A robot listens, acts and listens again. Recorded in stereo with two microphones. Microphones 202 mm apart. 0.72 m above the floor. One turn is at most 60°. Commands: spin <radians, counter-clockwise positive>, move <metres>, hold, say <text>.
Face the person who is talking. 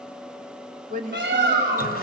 spin -0.70
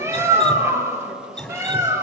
hold
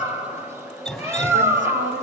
hold
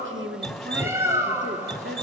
spin -1.05
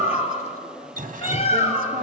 spin -0.61
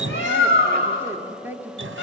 spin -0.17
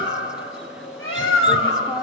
say Found it: a woman speaking, straight ahead.